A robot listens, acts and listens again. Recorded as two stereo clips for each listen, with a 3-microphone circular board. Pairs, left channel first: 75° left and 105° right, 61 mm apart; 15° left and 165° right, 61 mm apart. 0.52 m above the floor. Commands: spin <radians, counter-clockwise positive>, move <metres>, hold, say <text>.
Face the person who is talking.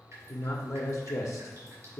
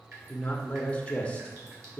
spin 1.40
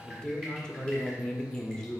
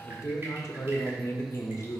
say Facing the man speaking, 1 to 2 m away.